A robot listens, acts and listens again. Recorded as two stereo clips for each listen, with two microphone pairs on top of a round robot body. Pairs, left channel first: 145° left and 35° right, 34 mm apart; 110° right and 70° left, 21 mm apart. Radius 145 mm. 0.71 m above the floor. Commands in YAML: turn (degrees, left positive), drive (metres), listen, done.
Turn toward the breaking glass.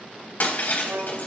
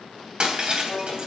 turn: 110
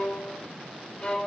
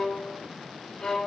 done: "I heard breaking glass from this way, but can't make it out now."